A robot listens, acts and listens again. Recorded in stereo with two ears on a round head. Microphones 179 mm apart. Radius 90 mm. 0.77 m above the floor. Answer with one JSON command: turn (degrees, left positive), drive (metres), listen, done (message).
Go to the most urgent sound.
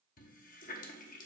{"listen": true}
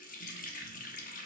{"listen": true}
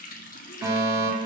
{"turn": -15}
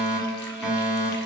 {"drive": 1.0}
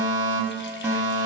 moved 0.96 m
{"turn": -15}
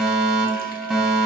{"drive": 1.0}
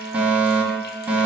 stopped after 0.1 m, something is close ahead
{"turn": -10}
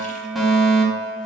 {"done": "I am next to the fire alarm."}